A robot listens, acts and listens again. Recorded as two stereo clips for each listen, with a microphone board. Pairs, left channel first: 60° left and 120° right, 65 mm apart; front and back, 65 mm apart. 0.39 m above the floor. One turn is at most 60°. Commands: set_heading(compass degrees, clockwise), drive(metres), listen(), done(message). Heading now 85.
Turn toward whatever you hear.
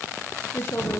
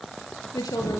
set_heading(75)
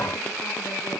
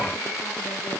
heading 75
listen()
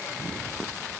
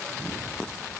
listen()
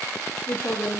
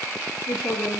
done("Found it: a woman speaking, straight ahead, over 4 m away.")